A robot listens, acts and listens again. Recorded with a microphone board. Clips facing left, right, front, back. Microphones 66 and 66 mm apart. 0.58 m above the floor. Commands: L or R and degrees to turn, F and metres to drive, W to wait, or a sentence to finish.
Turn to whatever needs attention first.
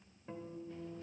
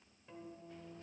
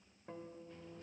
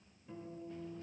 W
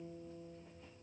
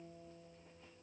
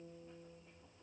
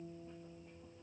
W
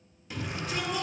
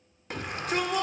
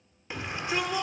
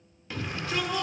R65
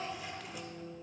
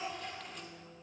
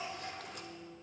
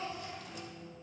W
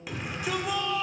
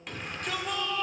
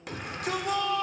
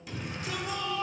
Found it: a shout, straight ahead, 1 to 2 m away.